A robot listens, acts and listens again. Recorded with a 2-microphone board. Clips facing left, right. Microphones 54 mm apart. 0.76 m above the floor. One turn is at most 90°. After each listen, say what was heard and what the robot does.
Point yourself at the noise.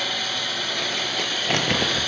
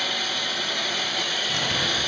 The crumpling: about 55° left or 125° left. Turn 55° left.
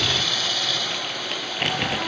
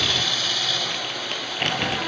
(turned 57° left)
Found it: crumpling, straight ahead, over 4 m away.